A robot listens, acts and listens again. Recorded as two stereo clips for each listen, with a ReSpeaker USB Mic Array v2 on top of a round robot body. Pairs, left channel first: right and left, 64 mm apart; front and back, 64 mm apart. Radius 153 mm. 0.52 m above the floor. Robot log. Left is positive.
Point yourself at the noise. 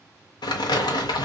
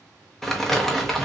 note: The crumpling: 85° right.
cmd yaw -85
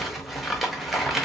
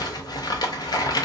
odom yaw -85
end: Facing the crumpling.